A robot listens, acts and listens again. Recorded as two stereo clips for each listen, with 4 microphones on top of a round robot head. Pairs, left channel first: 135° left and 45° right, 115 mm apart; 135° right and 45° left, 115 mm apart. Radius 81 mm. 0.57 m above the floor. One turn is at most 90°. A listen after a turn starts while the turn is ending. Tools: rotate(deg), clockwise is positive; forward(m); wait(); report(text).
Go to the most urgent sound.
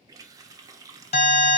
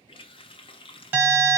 rotate(-90)
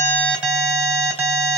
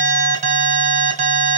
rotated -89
rotate(-25)
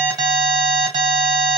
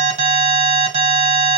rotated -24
forward(1.0)
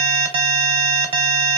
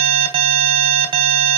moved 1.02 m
forward(1.0)
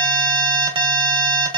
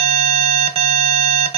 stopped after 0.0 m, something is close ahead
report("Arrived at the alarm, straight ahead.")